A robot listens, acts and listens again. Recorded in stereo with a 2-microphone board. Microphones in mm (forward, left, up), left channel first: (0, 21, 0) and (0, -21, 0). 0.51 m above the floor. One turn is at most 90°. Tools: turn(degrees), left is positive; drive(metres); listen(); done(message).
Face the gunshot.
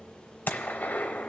turn(degrees=50)
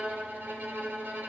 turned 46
listen()
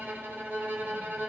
done("I heard a gunshot, but can't make it out now. It was about 5° left or 80° left.")